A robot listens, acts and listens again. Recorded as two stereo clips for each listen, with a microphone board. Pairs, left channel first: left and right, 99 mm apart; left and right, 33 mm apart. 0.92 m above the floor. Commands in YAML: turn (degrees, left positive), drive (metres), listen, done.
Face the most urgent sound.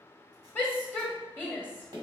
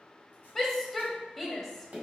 turn: 20
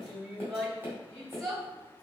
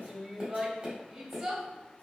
done: "Found it: a shout, straight ahead."